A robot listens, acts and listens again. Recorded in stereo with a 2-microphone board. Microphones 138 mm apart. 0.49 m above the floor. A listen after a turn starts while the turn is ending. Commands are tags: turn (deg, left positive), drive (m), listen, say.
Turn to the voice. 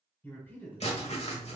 <turn deg="30"/>
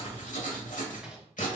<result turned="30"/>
<listen/>
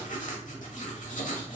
<listen/>
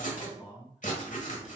<say>Facing the man speaking.</say>